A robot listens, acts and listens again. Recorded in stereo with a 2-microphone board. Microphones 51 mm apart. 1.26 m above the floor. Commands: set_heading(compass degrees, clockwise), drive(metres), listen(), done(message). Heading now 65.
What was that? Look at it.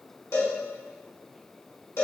set_heading(0)
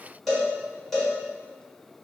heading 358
done("Found it: a cowbell, straight ahead, 1 to 2 m away.")